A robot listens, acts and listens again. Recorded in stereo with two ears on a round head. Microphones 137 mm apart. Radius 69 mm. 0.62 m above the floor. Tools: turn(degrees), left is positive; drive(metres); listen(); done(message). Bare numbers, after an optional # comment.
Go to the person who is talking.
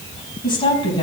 # The woman speaking: about 35° left or 145° left.
turn(35)
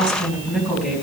drive(1.0)
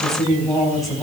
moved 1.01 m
drive(1.0)
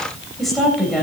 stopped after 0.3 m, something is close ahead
done("Something is in my way. I am facing the woman speaking but have not reached it.")